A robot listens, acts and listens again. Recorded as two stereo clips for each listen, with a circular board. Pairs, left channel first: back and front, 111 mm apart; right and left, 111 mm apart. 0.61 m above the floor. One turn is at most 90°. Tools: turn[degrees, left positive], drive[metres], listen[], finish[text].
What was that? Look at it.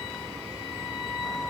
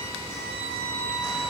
Action: listen[]
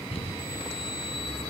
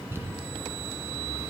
Thought: The crumpling: 155° left.
Action: turn[90]
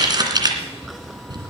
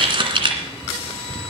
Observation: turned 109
Thought: The crumpling is now 50° left.
Action: turn[50]
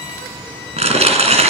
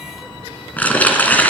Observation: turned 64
Thought: The crumpling is now 15° right.
Action: turn[-15]
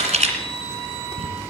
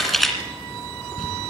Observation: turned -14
Action: finish[Found it: crumpling, straight ahead.]